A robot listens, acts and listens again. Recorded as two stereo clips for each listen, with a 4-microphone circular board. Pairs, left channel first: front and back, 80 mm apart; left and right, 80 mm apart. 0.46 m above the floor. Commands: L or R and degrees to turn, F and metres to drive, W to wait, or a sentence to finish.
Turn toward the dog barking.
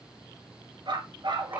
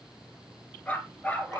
L160
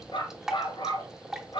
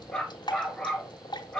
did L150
L10
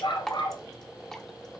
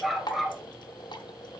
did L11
Found it: a dog barking, straight ahead.